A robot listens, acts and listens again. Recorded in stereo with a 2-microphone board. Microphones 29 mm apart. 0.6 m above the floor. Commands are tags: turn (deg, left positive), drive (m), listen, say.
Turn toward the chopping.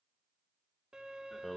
<listen/>
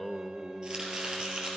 <turn deg="-35"/>
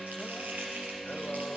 <turn deg="-110"/>
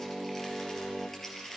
<turn deg="10"/>
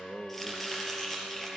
<say>Facing the chopping.</say>